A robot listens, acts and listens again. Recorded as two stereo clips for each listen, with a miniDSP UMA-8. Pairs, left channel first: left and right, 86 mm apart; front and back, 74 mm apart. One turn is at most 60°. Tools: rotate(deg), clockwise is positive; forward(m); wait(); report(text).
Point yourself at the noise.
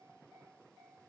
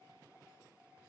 wait()
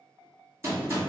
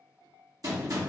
rotate(60)
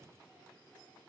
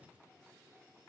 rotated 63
rotate(60)
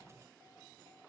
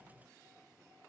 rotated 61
rotate(25)
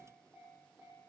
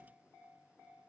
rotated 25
report("I heard a gunshot from this way, but can't make it out now.")